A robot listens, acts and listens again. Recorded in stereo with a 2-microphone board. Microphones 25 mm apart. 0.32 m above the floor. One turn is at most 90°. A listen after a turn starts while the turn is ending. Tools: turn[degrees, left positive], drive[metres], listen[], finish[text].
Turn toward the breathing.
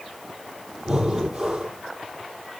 Action: turn[-30]
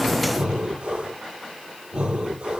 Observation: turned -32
Thought: So it is at 135° right.
Action: turn[-90]
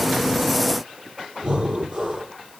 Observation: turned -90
Thought: The breathing is now 40° right.
Action: turn[-40]
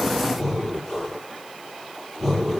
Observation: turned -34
Action: finish[Facing the breathing, over 4 m away.]